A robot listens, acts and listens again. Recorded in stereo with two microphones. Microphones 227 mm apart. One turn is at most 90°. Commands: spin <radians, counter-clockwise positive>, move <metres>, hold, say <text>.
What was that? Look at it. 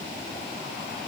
hold
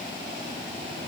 hold
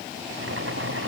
spin -1.57
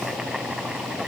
say Facing the boiling.